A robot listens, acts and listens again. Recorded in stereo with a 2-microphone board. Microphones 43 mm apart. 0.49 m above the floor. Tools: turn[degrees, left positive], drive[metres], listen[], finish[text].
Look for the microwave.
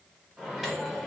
Action: turn[-30]
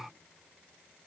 Action: listen[]
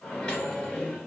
Thought: So it is at 25° left.
Action: turn[25]
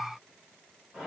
Thought: The microwave is now 10° right.
Action: turn[-10]
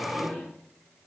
Action: finish[Facing the microwave, 1 to 2 m away.]